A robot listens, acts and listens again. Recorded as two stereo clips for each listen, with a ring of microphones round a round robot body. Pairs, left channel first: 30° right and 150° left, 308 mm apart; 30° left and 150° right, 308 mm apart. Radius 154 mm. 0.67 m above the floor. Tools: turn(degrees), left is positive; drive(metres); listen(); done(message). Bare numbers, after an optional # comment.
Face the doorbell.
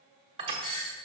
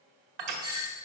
# The doorbell: 75° right.
turn(-75)
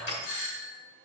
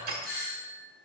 # The doorbell is now 25° right.
turn(-25)
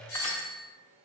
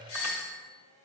done("Facing the doorbell, 2 to 4 m away.")